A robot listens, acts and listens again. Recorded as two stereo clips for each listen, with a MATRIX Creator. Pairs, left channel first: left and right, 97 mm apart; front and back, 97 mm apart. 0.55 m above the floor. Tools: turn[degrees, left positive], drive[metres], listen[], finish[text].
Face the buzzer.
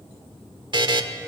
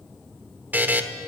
Thought: The buzzer: 110° right.
Action: turn[-110]
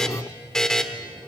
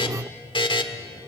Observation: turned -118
Action: finish[Found it: a buzzer, straight ahead.]